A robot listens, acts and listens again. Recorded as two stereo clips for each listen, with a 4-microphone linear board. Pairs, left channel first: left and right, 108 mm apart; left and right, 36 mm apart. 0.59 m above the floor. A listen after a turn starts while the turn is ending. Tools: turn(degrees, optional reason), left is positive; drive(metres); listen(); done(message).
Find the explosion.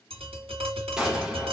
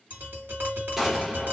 turn(degrees=-30)
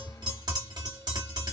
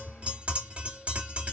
listen()
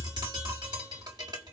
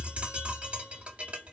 done("I heard an explosion, but can't make it out now. It was about 25° left or 145° right.")